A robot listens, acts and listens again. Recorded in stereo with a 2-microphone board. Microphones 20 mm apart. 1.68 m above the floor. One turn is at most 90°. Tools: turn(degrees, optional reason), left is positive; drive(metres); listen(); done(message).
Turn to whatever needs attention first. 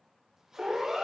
turn(degrees=-30, reason="The siren: about 30° right or 150° right.")
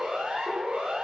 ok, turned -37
turn(degrees=-90, reason="So it is at 115° right.")
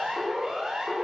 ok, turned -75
turn(degrees=-40, reason="The siren is now 40° right.")
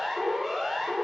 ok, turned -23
turn(degrees=-15, reason="The siren is now 15° right.")
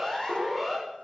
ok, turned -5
turn(degrees=-10, reason="The siren is now 10° right.")
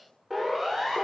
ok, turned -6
done("Found it: a siren, straight ahead, over 4 m away.")